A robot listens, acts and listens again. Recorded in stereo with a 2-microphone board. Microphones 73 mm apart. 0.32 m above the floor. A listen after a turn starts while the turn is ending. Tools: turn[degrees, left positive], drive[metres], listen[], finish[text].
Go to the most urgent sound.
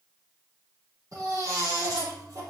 Thought: The baby crying: about 45° right or 135° right.
Action: turn[-45]
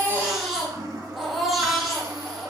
Action: drive[1.0]
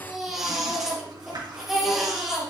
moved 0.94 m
Action: drive[1.0]
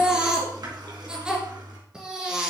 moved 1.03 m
Thought: The baby crying is now 10° right.
Action: turn[-10]
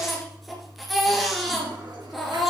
Action: drive[1.0]
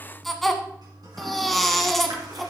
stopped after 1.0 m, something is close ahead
Action: finish[I am next to the baby crying.]